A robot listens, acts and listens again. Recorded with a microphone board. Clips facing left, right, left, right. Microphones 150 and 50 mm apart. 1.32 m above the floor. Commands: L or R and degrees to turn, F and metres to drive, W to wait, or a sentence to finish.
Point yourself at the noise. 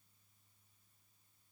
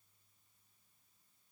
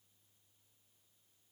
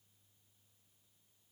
W
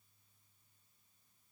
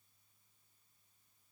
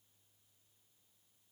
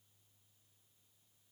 W
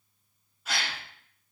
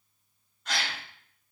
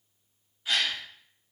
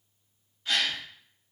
L30
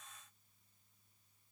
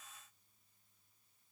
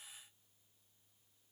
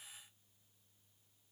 W
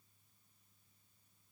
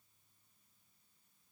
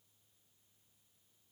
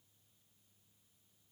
I heard a gasp, but can't make it out now. It was about 25° right or 145° left.